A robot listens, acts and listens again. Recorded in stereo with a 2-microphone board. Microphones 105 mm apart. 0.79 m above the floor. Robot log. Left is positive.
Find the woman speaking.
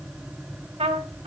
cmd idle
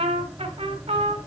cmd idle
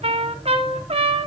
end: I can't make out a woman speaking to turn to.